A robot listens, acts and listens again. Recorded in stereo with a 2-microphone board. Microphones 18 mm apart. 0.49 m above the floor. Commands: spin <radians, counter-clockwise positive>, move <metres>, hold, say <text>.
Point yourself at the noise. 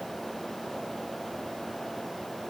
hold
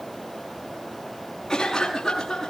spin 0.44
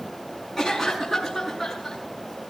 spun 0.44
say Found it: a cough, straight ahead, over 4 m away.